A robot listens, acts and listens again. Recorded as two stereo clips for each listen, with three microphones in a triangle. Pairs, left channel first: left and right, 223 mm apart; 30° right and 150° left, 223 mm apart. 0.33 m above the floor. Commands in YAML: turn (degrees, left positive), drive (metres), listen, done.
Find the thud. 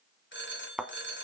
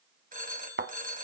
turn: -175
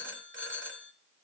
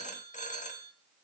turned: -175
done: "Facing where the thud came from. I can't hear it now."